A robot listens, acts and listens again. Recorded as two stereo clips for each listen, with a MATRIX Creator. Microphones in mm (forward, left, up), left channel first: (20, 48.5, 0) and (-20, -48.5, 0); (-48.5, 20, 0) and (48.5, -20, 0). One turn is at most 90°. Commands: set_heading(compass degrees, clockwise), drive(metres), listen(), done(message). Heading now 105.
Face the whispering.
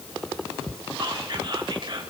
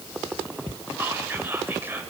set_heading(195)
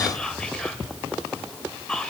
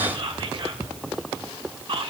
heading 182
set_heading(192)
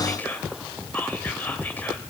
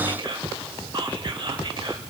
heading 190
done("Found it: whispering, straight ahead.")